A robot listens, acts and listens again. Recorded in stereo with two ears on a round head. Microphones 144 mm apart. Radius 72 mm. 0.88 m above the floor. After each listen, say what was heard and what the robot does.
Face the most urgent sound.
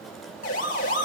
The siren: about 55° left or 125° left. Turn 55° left.
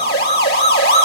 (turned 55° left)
So it is at 70° left. Turn 70° left.
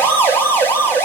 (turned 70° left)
The siren is now 15° left. Turn 15° left.
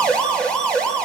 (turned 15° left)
Found it: a siren, straight ahead, over 4 m away.